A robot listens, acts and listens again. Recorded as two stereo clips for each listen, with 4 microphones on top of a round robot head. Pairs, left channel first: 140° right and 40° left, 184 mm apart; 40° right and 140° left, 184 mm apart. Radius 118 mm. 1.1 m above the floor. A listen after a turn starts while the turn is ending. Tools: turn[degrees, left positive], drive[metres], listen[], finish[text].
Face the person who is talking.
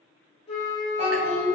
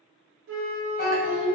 Thought: The child speaking: 20° right.
Action: turn[-20]
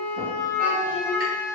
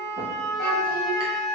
Action: listen[]
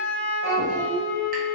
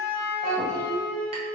Thought: The child speaking is now 10° right.
Action: turn[-10]
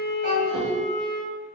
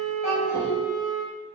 Action: finish[Found it: a child speaking, straight ahead.]